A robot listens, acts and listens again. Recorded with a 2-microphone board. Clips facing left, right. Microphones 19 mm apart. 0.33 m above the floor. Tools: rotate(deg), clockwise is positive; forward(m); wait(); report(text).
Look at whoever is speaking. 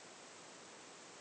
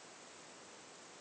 wait()
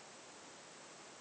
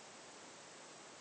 wait()
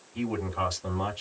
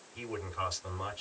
rotate(-35)
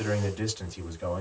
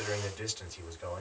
report("Facing the man speaking.")